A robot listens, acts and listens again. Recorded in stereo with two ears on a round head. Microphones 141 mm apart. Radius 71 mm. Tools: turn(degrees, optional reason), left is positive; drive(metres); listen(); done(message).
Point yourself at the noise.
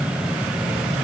listen()
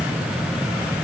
listen()
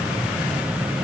done("I can't make out anything to turn to.")